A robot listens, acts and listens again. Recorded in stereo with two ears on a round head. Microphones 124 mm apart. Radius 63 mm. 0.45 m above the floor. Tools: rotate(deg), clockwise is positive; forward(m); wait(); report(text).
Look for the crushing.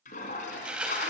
rotate(30)
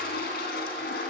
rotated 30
wait()
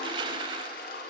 rotate(145)
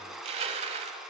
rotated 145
rotate(45)
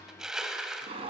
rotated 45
report("Found it: crushing, straight ahead.")